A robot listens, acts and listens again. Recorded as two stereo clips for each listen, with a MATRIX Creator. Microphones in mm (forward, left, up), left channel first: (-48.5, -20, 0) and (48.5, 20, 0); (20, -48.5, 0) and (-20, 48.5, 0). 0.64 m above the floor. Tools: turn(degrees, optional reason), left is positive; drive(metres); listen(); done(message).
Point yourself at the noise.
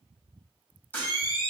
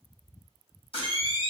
turn(degrees=-85, reason="The camera shutter: 85° right.")
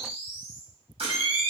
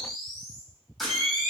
turn(degrees=20, reason="The camera shutter is now 20° left.")
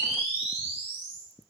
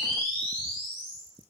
turn(degrees=10, reason="The camera shutter is now 10° left.")
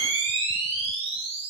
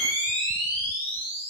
done("Facing the camera shutter.")